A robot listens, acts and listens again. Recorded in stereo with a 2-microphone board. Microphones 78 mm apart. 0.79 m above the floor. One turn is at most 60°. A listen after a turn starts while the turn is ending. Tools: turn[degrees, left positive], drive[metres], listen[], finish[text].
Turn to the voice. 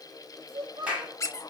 Action: turn[-60]
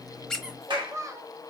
Thought: So it is at 40° right.
Action: turn[-40]
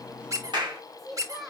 Action: finish[Facing the child speaking.]